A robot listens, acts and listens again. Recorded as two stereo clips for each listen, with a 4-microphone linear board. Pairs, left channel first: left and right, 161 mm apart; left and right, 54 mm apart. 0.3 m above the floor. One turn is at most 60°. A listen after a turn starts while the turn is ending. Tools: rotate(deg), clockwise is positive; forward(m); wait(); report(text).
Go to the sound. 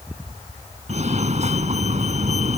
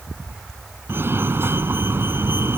rotate(45)
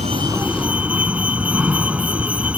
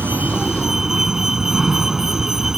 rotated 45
rotate(10)
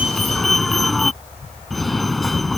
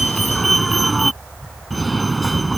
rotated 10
forward(1.0)
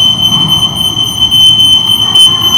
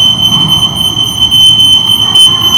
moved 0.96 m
forward(1.0)
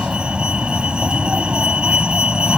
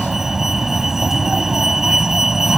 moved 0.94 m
forward(1.0)
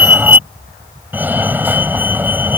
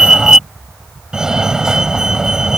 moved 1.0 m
rotate(20)
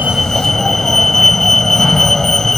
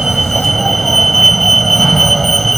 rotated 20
forward(1.0)
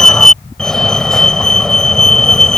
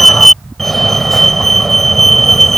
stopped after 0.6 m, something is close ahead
rotate(-10)
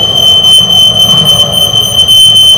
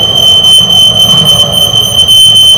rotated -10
report("I am next to the fire alarm.")